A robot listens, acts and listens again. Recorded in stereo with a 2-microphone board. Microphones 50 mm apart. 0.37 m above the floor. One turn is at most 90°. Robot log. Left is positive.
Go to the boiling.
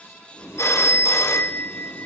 note: The boiling: about 65° left or 115° left.
cmd yaw +65
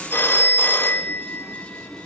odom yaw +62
cmd fwd 1.0
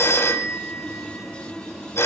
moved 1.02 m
cmd fwd 1.0
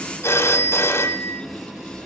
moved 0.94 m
cmd fwd 1.0
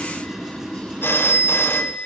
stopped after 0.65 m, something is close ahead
note: The boiling is now 10° right.
cmd yaw -10
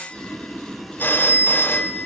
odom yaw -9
end: I am next to the boiling.